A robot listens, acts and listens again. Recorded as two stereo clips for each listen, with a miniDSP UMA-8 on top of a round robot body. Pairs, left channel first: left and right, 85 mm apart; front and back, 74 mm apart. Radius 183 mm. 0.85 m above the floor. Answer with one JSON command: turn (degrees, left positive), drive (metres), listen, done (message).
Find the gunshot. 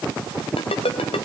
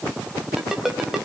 {"listen": true}
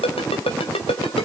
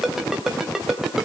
{"listen": true}
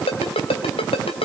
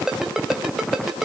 {"done": "I can't make out a gunshot, only a ringtone."}